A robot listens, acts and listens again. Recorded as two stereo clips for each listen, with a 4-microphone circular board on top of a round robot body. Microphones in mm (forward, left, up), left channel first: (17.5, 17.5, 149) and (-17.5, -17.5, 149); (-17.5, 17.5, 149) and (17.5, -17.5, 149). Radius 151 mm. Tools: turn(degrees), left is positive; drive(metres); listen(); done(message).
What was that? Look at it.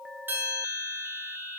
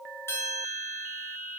turn(degrees=175)
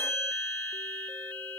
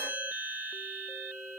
done("Found it: a bell, straight ahead, over 4 m away.")